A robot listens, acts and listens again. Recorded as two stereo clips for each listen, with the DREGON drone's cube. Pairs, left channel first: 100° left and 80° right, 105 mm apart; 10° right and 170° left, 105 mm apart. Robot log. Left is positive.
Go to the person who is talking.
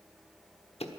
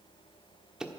cmd idle
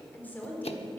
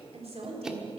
note: The woman speaking: 175° left.
cmd yaw +175
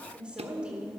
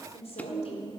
cmd fwd 1.0
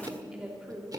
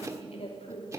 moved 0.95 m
cmd fwd 1.0
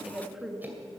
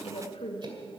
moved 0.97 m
note: The woman speaking is now 10° left.
cmd yaw +10
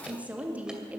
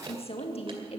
cmd fwd 1.0
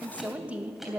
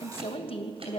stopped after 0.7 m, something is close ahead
end: I am next to the woman speaking.